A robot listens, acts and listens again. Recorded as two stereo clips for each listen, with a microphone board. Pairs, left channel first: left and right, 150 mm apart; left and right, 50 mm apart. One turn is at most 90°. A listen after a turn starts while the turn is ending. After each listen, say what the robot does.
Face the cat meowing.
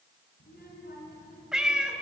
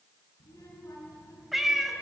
Turn 30° right.
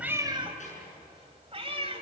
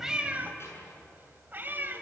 Turn 90° right.
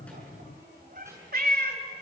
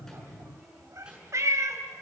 Turn 75° right.
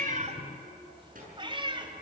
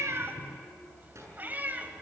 Turn 30° right.
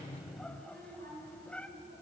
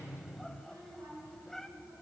Turn 10° left.
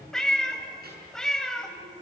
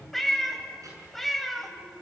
Found it: a cat meowing, straight ahead, 2 to 4 m away.